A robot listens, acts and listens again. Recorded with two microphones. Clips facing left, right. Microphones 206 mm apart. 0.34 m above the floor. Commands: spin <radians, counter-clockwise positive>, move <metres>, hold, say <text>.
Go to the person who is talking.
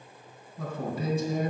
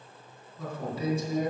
spin 1.05
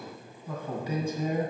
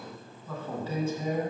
spin 0.26
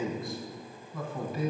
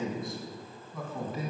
move 1.0
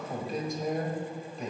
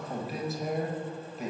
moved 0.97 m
move 1.0
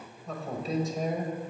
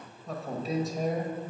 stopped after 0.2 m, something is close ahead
say I am next to the man speaking.